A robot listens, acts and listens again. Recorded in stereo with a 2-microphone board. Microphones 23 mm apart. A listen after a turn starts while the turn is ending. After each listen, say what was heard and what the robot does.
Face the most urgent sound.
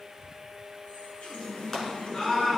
The scream: about 20° left or 160° left. Turn 20° left.
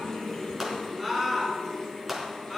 Found it: a scream, straight ahead.